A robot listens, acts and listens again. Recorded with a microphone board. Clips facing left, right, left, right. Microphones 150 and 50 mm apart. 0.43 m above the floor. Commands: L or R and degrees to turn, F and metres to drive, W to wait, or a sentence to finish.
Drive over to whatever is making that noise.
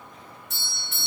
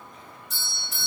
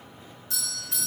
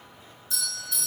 L70
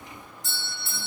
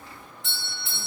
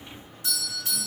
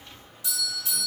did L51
L45
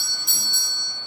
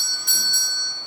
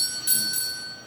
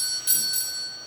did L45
F1.0
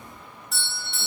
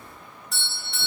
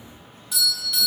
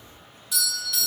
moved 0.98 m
F1.0
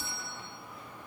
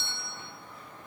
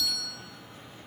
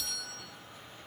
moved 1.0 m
F1.0
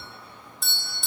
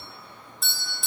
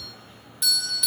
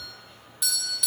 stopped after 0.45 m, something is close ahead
Arrived at the doorbell, straight ahead.